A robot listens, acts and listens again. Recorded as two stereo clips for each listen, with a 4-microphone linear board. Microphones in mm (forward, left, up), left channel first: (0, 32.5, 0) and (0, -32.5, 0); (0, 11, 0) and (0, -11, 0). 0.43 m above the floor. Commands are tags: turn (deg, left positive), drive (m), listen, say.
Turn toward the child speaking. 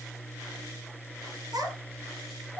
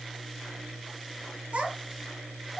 <turn deg="-75"/>
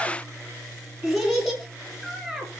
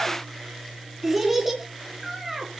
<say>Facing the child speaking, over 4 m away.</say>